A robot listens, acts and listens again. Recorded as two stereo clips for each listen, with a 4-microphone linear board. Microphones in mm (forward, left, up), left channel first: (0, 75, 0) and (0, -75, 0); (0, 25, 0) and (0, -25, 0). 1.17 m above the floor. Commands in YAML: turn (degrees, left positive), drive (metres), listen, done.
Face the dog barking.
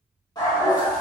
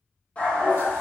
turn: 25
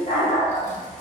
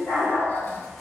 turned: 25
turn: 125
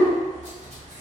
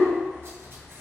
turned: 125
done: "Found it: a dog barking, straight ahead, under 1 m away."